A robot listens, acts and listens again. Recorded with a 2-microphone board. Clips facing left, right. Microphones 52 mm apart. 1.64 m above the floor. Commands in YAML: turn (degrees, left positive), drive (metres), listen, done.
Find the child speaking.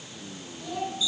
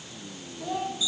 turn: -45
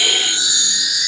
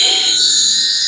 listen: true
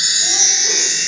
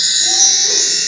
listen: true
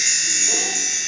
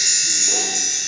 done: "I heard a child speaking, but can't make it out now. It was about straight ahead or 90° right."